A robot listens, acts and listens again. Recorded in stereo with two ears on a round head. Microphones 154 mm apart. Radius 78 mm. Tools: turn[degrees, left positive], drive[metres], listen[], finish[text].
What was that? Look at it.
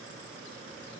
Action: listen[]
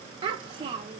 Thought: The child speaking: about 30° right or 150° right.
Action: turn[-30]
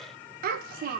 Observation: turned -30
Thought: So it is at 115° right.
Action: turn[-115]
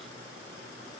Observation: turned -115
Action: listen[]
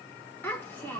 Thought: The child speaking is now 15° left.
Action: turn[15]
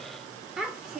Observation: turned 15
Action: finish[Found it: a child speaking, straight ahead.]